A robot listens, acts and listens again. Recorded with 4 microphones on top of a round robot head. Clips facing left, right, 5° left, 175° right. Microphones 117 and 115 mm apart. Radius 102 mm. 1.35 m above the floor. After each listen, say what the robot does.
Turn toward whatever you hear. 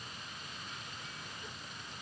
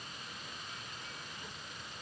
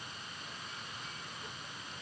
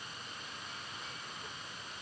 Keep listening.
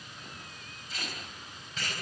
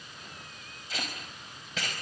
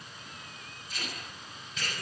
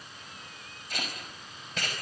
Turn 125° right.
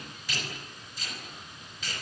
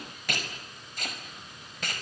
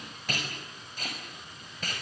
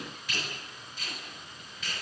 Turn 50° right.
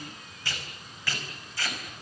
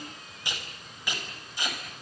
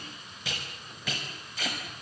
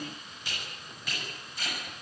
Turn 15° right.
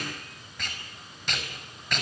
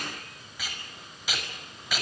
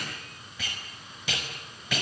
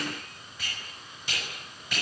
Found it: tape being pulled, straight ahead, over 4 m away.